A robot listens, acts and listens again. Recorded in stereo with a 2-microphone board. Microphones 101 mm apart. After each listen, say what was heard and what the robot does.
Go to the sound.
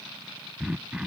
Turn 30° right.
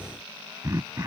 So it is at 140° right. Turn 140° right.
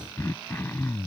The throat clearing is now 30° left. Turn 30° left.
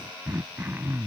The throat clearing is now 25° right. Turn 25° right.
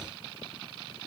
Keep listening.
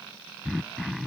Drive 1.0 m forward.
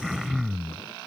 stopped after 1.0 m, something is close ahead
I am next to the throat clearing.